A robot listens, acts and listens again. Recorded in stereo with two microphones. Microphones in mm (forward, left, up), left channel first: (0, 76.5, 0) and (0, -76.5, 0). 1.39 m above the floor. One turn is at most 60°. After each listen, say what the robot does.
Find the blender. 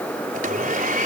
Turn 60° right.
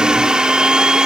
Found it: a blender, straight ahead.